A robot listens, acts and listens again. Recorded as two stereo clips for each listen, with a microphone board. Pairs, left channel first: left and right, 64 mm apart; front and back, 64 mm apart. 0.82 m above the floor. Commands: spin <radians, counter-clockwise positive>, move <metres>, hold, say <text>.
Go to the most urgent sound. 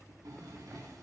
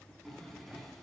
hold
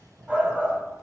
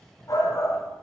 spin -0.35
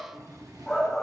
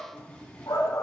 move 1.0
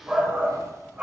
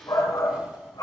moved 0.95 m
spin -0.35
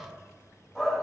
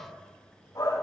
move 1.0
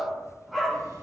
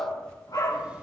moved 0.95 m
move 1.0
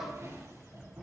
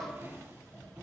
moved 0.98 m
hold
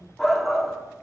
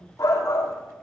move 1.0
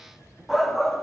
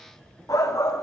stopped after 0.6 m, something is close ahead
say I am next to the shout.